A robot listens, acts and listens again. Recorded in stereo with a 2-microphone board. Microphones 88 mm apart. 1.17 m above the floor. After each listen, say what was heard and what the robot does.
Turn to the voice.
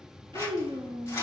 The child speaking: about 70° right or 110° right. Turn 70° right.
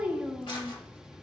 So it is at 15° right. Turn 15° right.
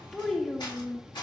Facing the child speaking.